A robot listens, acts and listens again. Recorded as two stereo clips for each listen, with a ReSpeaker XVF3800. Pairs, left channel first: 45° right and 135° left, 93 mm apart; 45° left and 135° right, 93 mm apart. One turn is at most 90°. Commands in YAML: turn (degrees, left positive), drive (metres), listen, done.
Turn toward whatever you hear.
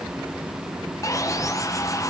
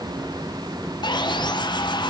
turn: 10
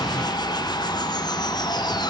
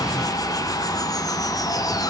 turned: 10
done: "Found it: sawing, straight ahead."